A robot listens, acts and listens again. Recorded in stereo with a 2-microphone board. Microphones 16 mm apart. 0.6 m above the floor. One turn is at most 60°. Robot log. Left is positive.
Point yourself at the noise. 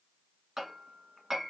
note: The hammering: about 30° right or 150° right.
cmd yaw -30
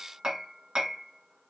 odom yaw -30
note: So it is at 120° right.
cmd yaw -60
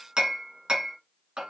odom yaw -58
note: The hammering is now 65° right.
cmd yaw -60
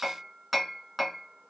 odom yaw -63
end: Facing the hammering.